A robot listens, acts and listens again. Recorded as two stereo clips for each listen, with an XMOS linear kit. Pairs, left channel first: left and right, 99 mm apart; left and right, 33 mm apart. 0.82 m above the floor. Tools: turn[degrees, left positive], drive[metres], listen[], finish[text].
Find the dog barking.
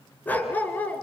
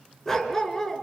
Thought: The dog barking: about 15° left or 165° left.
Action: turn[15]
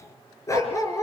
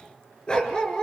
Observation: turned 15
Thought: The dog barking: about 30° left or 150° left.
Action: turn[30]
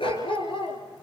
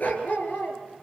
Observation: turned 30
Thought: So it is at 120° left.
Action: turn[120]
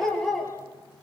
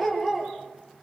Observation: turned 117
Action: finish[Found it: a dog barking, straight ahead.]